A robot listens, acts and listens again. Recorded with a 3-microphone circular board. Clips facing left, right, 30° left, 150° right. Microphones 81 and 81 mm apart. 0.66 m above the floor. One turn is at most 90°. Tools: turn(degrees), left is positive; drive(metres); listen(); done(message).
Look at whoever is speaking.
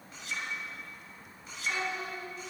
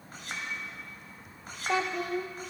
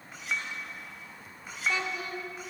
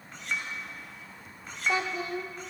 turn(degrees=-90)
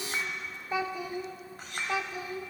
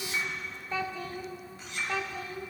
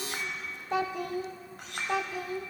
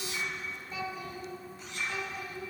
turn(degrees=15)
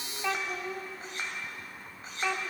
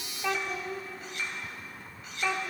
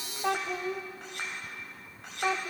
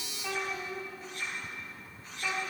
done("Found it: a child speaking, straight ahead, 1 to 2 m away.")